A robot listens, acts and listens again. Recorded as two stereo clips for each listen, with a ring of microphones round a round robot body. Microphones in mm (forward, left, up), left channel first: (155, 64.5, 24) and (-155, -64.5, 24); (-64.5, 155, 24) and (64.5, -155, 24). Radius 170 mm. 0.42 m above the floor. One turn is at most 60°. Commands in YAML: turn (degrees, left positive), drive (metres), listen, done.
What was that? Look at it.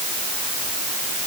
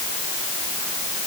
listen: true
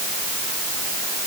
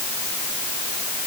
listen: true
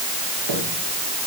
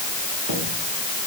done: "I can't make out anything to turn to."